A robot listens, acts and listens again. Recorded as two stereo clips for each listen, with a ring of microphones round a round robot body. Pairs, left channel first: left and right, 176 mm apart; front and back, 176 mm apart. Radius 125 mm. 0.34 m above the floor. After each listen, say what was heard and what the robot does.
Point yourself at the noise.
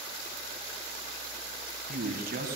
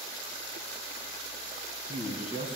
The man speaking: 65° right. Turn 65° right.
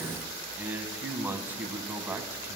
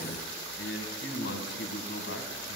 The man speaking is now 10° right. Turn 10° right.
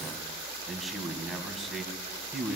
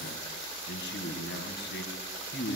Facing the man speaking, 2 to 4 m away.